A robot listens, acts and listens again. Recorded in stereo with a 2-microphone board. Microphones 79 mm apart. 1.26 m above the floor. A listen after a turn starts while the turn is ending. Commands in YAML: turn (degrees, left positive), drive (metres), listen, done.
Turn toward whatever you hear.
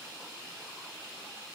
listen: true
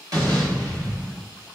turn: -45
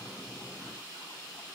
listen: true
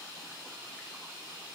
done: "I heard an explosion, but can't make it out now. It was about straight ahead or 90° right."